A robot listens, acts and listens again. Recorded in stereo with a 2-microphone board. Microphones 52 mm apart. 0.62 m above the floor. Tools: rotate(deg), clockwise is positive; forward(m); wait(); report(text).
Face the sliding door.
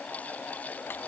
wait()
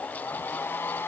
wait()
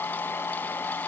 report("I can't make out a sliding door, only a hair dryer.")